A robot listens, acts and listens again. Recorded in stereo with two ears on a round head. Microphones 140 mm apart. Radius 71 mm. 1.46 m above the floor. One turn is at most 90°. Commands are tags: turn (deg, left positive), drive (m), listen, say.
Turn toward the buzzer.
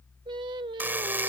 <turn deg="-30"/>
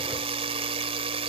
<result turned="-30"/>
<turn deg="-90"/>
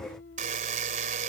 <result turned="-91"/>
<turn deg="-50"/>
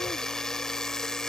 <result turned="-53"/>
<say>Facing the buzzer.</say>